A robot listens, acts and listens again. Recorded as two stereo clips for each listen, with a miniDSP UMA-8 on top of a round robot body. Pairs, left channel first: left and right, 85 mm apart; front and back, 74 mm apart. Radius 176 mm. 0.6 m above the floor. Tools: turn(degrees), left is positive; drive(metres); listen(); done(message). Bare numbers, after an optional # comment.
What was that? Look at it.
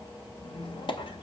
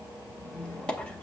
# The squeak: 75° left.
turn(75)
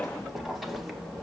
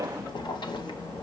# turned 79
done("Found it: a squeak, straight ahead, 1 to 2 m away.")